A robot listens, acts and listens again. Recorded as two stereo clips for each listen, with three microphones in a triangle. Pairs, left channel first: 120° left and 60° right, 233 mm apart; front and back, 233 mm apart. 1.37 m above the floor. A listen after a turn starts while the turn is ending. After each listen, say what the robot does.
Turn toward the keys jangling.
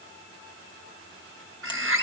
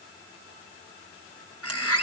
Keep listening.
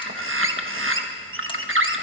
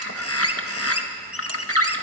Keep listening.
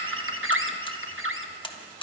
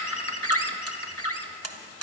I can't make out keys jangling to turn to.